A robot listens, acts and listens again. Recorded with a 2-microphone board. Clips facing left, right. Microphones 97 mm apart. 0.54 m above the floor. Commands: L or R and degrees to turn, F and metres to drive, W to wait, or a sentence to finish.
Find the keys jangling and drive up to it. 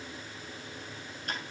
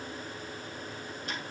W
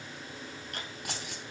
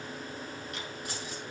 L70
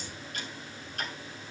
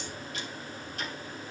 W
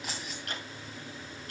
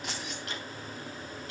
F1.0
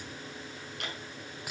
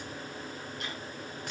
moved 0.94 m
F1.0
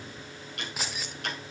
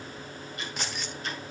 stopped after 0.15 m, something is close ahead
Arrived at the keys jangling, straight ahead.